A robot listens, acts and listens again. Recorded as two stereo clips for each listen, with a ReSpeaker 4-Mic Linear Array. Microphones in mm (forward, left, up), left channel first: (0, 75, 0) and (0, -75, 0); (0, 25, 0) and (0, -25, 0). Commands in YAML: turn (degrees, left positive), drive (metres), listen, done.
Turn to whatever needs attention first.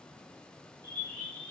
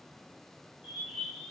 listen: true
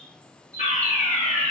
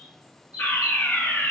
turn: 55
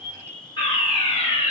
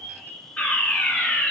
turn: 40
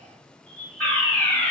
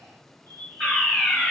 turn: 10
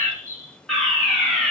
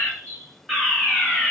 done: "Facing the fire alarm."